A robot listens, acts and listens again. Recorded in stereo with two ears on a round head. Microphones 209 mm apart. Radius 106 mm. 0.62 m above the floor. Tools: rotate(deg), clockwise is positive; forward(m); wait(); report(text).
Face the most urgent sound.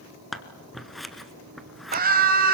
rotate(40)
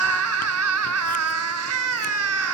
rotate(95)
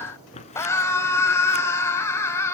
rotate(-10)
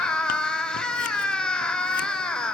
report("Found it: a scream, straight ahead.")